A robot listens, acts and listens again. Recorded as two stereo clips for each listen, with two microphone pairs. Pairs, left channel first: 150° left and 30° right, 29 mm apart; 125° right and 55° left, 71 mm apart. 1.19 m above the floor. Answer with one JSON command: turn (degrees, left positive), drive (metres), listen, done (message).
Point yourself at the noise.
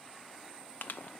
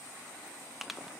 {"turn": 140}
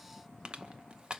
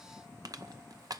{"turn": 30}
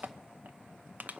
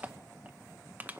{"turn": -10}
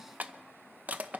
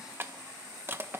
{"done": "Found it: crushing, straight ahead, under 1 m away."}